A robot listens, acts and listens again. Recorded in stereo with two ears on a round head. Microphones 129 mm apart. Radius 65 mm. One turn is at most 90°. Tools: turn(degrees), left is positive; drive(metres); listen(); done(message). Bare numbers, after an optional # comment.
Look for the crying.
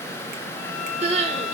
# The crying: about 45° right or 135° right.
turn(-45)
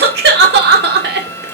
# So it is at 90° right.
turn(-90)
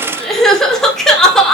done("Facing the crying, 2 to 4 m away.")